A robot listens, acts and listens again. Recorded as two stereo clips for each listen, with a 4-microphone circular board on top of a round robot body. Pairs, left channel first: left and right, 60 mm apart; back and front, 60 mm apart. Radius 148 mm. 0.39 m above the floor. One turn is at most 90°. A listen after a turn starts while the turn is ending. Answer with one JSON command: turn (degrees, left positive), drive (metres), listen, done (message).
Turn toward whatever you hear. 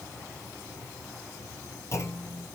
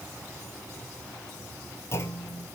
{"turn": 90}
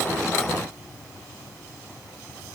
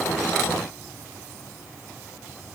{"turn": 45}
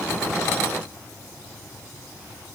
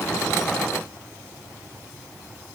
{"done": "Facing where the clunk came from. I can't hear it now."}